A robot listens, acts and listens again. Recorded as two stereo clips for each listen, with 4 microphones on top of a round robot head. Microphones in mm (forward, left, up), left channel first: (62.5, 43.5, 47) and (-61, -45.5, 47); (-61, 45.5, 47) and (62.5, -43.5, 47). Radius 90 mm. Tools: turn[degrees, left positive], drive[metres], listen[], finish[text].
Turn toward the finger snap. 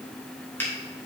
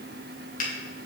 Thought: The finger snap: 110° left.
Action: turn[110]
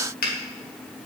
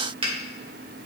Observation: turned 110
Thought: The finger snap is now 20° left.
Action: turn[20]
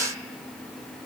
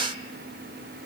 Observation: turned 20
Action: listen[]
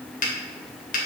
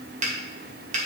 Action: finish[Found it: a finger snap, straight ahead.]